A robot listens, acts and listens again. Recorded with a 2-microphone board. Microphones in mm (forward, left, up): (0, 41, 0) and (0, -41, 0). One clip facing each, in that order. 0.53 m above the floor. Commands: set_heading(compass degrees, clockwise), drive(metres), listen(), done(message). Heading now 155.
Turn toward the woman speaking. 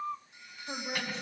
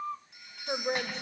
set_heading(205)
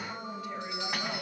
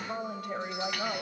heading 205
set_heading(265)
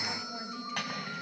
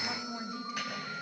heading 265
done("Found it: a woman speaking, straight ahead, 2 to 4 m away.")